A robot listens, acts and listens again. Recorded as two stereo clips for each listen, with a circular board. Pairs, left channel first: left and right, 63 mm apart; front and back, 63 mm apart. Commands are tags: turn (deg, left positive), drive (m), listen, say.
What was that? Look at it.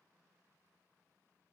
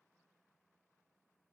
<listen/>
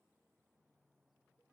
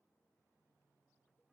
<listen/>
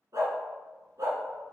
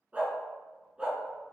<turn deg="-105"/>
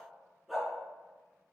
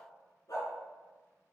<say>Found it: a dog barking, straight ahead.</say>